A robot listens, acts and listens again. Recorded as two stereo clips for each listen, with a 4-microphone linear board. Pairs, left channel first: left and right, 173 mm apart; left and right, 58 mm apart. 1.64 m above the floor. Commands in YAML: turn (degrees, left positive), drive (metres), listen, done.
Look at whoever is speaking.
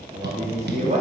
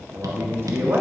turn: -45
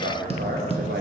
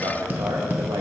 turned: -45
turn: -90
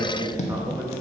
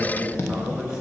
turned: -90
turn: -15
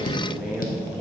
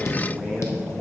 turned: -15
done: "Facing the man speaking."